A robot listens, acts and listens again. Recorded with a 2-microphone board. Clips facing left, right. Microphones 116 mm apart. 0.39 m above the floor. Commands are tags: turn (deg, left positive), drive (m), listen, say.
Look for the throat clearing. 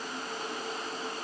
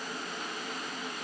<listen/>
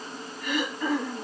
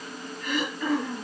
<turn deg="30"/>
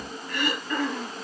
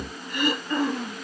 <turn deg="-20"/>
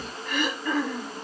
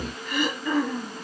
<say>Found it: throat clearing, straight ahead.</say>